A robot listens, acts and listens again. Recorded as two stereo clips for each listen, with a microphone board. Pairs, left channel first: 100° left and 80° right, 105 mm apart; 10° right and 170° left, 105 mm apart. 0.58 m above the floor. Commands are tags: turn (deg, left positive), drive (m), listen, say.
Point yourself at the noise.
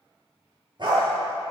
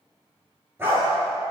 <turn deg="-125"/>
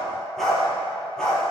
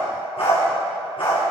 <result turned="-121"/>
<turn deg="15"/>
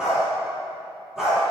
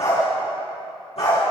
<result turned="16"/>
<say>Found it: a dog barking, straight ahead.</say>